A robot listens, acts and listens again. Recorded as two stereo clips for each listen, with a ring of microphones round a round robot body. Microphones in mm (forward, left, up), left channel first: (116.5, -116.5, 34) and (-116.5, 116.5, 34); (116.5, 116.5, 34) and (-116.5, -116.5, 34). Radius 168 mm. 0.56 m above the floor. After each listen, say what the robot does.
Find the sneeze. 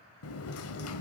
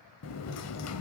Keep listening.
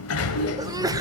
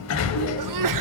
Turn 145° right.
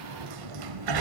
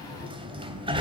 Facing where the sneeze came from. I can't hear it now.